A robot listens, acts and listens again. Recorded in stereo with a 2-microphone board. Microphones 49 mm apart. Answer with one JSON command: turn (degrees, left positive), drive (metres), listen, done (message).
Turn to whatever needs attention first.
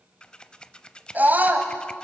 {"turn": -35}
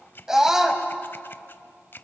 {"turn": -10}
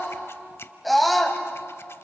{"done": "Facing the scream, 2 to 4 m away."}